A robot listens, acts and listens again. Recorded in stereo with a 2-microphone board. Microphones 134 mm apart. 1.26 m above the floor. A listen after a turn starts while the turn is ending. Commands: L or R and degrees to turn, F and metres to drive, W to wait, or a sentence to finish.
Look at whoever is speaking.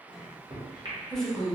L30
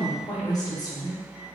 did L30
L145
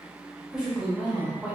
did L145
Found it: a woman speaking, straight ahead.